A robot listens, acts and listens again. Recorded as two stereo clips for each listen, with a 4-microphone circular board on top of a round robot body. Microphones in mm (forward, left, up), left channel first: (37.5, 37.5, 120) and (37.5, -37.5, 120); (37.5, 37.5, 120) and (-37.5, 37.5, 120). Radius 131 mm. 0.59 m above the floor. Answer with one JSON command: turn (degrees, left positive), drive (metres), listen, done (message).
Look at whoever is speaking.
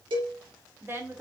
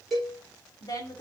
{"turn": -35}
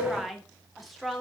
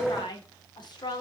{"done": "Found it: a woman speaking, straight ahead, 2 to 4 m away."}